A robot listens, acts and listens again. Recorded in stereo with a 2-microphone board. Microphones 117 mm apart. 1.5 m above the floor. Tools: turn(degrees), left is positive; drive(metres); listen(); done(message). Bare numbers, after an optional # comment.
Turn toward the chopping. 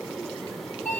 listen()
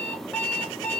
listen()
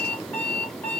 done("I can't make out chopping, only an alarm clock.")